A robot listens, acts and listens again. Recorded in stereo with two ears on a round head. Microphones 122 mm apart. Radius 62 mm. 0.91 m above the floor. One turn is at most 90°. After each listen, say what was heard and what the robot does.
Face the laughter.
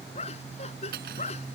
The laughter: about 50° left or 130° left. Turn 50° left.
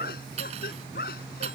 So it is at 75° left. Turn 75° left.
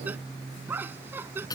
The laughter is now 15° right. Turn 15° right.
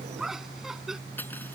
Facing the laughter.